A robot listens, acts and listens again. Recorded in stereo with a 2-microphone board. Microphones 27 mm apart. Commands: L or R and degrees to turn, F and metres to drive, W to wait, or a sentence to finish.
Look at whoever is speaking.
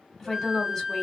L30
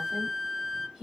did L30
R20
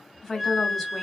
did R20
Found it: a woman speaking, straight ahead, 1 to 2 m away.